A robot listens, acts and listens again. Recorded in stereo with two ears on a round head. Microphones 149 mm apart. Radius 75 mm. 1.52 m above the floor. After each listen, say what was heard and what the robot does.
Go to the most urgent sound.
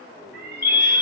Turn 30° right.
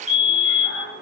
So it is at 135° right. Turn 135° right.
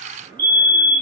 The fire alarm is now 10° left. Turn 10° left.
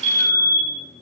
Drive 1.0 m forward.
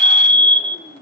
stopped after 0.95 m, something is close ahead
I am next to the fire alarm.